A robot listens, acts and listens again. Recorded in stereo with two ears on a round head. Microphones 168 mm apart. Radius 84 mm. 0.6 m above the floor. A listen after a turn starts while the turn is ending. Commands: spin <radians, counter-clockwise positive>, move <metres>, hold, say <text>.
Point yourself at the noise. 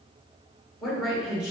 spin -0.52
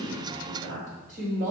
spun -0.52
spin -2.36
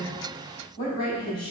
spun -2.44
spin 0.35
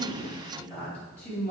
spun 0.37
say Facing the woman speaking, 2 to 4 m away.